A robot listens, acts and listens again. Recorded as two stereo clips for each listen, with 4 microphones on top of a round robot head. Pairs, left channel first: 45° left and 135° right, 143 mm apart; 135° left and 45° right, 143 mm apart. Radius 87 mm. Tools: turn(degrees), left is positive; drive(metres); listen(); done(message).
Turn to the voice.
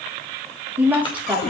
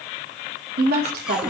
turn(degrees=-50)
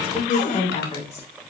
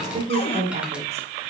done("Facing the woman speaking, 2 to 4 m away.")